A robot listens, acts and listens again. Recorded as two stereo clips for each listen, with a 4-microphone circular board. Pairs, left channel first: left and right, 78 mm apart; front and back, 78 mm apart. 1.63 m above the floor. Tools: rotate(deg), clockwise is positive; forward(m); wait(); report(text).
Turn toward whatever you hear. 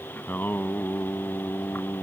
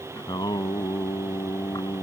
rotate(-30)
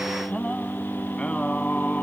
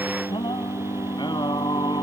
rotate(-15)
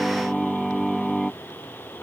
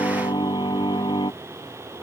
report("Found it: singing, straight ahead.")